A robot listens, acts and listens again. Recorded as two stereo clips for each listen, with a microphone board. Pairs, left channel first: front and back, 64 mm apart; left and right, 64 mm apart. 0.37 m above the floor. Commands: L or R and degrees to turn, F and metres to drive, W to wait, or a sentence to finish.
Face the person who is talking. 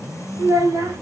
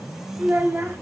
R145
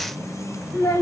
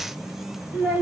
R20
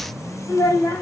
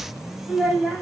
Found it: a child speaking, straight ahead.